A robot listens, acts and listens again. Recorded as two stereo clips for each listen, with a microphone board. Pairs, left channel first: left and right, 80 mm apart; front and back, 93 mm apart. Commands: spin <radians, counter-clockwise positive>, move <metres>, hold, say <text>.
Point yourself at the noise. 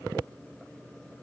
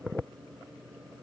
hold
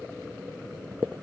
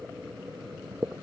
hold
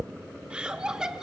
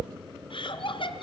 spin -0.17
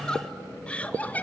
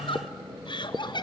spin 0.35
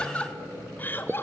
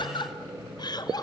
spin 0.52
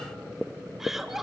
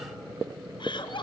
say Found it: laughter, straight ahead, 1 to 2 m away.